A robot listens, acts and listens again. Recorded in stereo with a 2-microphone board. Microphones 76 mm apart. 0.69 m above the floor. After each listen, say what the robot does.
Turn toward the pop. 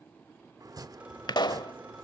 Turn 65° left.
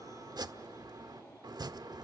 Keep listening.
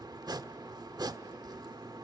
I heard a pop, but can't make it out now. It was about straight ahead or 50° left.